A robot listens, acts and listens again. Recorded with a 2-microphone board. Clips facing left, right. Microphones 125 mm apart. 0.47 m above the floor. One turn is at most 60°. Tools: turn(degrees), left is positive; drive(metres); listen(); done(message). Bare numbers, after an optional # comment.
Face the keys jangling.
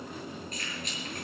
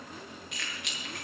turn(-60)
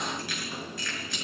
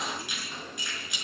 # So it is at 15° right.
turn(-15)
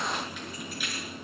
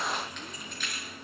# The keys jangling is now 10° left.
turn(10)
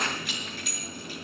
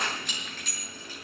# The keys jangling is now 10° left.
turn(10)
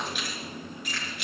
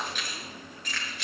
# The keys jangling is now 10° left.
turn(10)
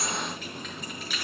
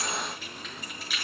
done("Found it: keys jangling, straight ahead.")